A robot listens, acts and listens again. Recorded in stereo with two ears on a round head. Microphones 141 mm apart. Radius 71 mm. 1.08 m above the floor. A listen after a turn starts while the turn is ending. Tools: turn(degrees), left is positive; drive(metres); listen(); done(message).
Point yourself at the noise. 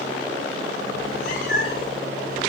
turn(degrees=60)
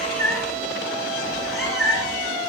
done("Found it: a cat meowing, straight ahead.")